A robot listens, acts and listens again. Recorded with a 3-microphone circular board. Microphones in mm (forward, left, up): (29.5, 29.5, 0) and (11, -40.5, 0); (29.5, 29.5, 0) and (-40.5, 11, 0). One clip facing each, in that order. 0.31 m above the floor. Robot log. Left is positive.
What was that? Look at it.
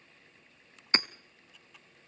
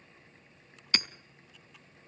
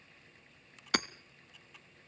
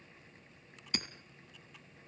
note: The hammering: 15° left.
cmd yaw +15
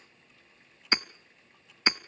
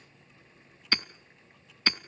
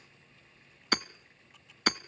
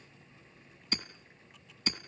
end: Found it: hammering, straight ahead, under 1 m away.